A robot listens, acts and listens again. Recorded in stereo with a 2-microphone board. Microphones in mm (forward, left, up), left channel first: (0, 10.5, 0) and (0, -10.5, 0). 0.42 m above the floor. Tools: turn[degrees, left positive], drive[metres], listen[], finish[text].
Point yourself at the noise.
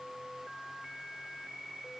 Action: listen[]
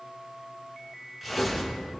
Action: turn[-30]
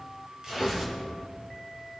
Thought: So it is at 145° right.
Action: turn[-145]
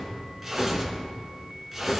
Thought: The tearing paper is now 10° right.
Action: turn[-10]
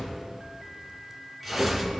Action: finish[Found it: tearing paper, straight ahead.]